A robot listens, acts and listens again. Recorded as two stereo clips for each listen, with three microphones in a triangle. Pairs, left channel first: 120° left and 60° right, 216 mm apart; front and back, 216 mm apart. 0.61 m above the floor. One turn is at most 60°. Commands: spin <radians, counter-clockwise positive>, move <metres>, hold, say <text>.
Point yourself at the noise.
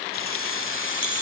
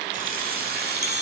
spin 1.05
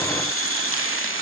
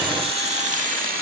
spin 1.05
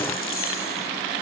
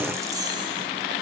spin 1.05
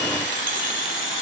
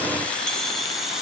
spin 1.05
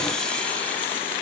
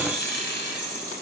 spin 0.61
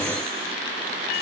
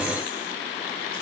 hold
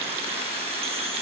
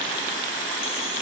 hold
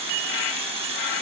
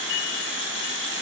say Found it: keys jangling, straight ahead.